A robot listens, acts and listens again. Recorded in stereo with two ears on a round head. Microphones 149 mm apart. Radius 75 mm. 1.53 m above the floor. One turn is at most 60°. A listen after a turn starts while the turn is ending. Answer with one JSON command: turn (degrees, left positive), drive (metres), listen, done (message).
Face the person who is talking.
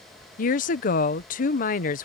{"turn": 50}
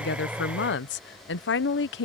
{"turn": 60}
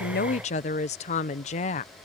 {"turn": 40}
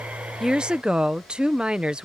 {"done": "Found it: a woman speaking, straight ahead."}